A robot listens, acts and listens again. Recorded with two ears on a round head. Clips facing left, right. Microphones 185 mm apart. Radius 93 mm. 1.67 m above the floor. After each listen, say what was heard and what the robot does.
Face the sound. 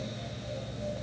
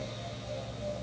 Keep listening.
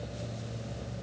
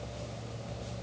Keep listening.
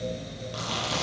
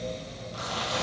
The chewing: about 60° left or 120° left. Turn 60° left.
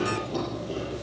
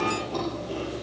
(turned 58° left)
Found it: chewing, straight ahead, over 4 m away.